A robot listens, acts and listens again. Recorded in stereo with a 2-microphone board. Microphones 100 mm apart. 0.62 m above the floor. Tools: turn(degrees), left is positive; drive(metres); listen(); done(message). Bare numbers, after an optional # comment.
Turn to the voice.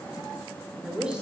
turn(-30)
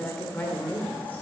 # So it is at 20° left.
turn(20)
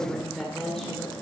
done("Found it: a woman speaking, straight ahead, 1 to 2 m away.")